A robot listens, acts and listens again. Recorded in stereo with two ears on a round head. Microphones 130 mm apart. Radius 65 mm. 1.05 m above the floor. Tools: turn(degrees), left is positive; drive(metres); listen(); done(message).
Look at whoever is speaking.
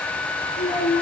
turn(degrees=50)
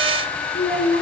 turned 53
turn(degrees=75)
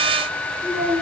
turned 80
done("Found it: a child speaking, straight ahead, over 4 m away.")